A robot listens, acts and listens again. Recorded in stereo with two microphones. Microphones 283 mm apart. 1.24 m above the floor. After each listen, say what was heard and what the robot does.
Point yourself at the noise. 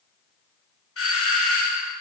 The doorbell: about 50° left or 130° left. Turn 50° left.
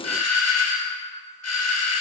So it is at 75° left. Turn 75° left.
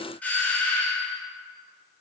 Found it: a doorbell, straight ahead, 1 to 2 m away.